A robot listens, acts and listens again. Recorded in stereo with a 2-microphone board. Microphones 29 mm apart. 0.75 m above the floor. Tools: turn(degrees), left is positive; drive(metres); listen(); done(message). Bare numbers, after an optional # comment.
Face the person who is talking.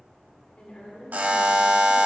# The woman speaking: about 50° left or 130° left.
turn(50)
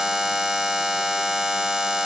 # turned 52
listen()
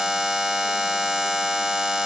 listen()
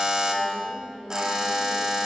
done("Found it: a woman speaking, straight ahead.")